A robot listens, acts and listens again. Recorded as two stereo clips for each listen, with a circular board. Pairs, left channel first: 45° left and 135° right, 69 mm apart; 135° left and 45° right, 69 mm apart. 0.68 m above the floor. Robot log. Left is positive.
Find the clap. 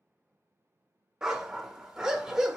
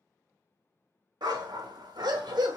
cmd idle
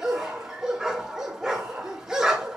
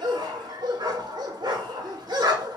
cmd idle
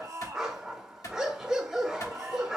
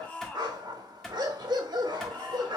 note: The clap: 45° left.
cmd yaw +45
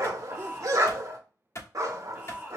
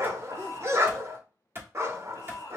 end: Facing the clap.